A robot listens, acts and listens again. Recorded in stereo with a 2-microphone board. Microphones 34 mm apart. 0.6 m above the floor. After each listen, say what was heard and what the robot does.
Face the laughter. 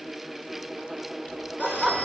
Turn 30° left.
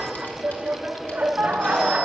So it is at 40° right. Turn 40° right.
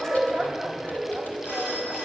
Found it: laughter, straight ahead.